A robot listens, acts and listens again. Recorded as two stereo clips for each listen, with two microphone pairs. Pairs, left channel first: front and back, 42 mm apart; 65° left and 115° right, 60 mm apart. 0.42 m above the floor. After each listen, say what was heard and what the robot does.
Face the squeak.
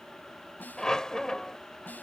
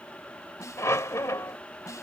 The squeak: 75° left. Turn 75° left.
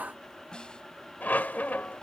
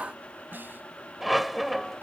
The squeak is now 30° right. Turn 30° right.
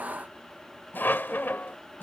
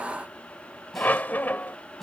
The squeak is now 10° left. Turn 10° left.
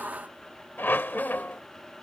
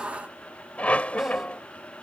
Found it: a squeak, straight ahead.